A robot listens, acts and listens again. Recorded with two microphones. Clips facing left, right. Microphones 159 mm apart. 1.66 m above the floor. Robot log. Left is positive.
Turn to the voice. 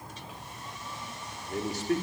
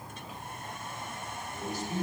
cmd yaw +90
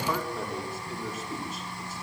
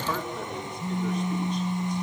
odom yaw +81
end: Facing the man speaking.